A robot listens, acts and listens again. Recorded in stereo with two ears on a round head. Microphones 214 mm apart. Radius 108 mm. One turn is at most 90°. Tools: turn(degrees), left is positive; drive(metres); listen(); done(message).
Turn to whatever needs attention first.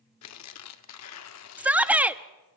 turn(degrees=-30)
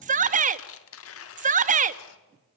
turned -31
turn(degrees=-90)
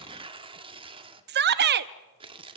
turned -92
turn(degrees=-50)
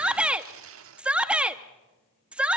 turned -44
done("Found it: a shout, straight ahead, under 1 m away.")